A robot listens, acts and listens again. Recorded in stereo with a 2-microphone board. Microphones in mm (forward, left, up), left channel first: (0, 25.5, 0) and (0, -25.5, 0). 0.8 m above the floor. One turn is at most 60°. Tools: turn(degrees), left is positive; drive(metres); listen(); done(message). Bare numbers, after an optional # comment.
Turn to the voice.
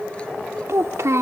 # The child speaking: about 70° right or 110° right.
turn(-60)
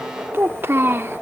# So it is at 50° right.
turn(-50)
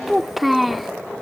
done("Facing the child speaking.")